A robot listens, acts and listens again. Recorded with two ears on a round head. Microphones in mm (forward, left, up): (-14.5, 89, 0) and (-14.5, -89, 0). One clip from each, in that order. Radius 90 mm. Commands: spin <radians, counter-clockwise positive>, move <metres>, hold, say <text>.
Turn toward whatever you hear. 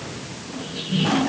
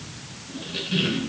spin -1.31
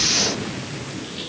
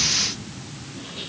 say Found it: a squeak, straight ahead, over 4 m away.